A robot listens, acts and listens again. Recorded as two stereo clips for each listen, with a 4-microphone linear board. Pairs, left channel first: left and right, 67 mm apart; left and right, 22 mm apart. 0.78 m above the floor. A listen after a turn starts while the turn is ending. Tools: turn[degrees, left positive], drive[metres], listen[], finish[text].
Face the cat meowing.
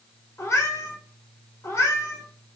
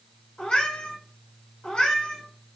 Thought: The cat meowing: about 45° left or 135° left.
Action: turn[45]
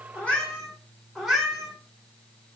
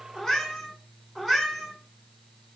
Action: finish[Facing the cat meowing.]